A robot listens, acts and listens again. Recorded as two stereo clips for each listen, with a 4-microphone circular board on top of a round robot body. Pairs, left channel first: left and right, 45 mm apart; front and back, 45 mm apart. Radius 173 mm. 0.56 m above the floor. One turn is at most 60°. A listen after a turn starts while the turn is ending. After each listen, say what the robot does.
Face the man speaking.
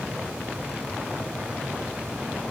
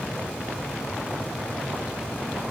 Keep listening.
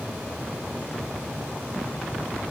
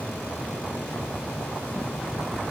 Keep listening.
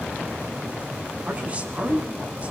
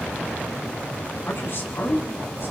Turn 30° right.
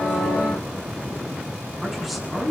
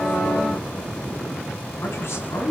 Found it: a man speaking, straight ahead.